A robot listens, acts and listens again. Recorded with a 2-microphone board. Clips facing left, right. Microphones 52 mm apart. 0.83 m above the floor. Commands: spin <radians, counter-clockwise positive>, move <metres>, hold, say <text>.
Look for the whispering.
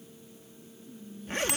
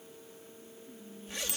spin -0.52
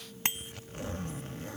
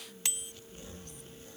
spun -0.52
hold
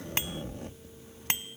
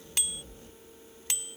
hold
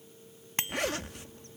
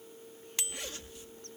say I heard whispering, but can't make it out now. It was about straight ahead or 120° right.